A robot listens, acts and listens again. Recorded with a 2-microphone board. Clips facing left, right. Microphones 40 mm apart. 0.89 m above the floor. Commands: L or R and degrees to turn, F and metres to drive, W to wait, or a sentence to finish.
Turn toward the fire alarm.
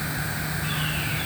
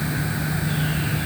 W
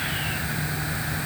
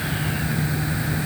W
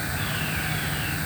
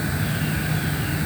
I can't make out a fire alarm to turn to.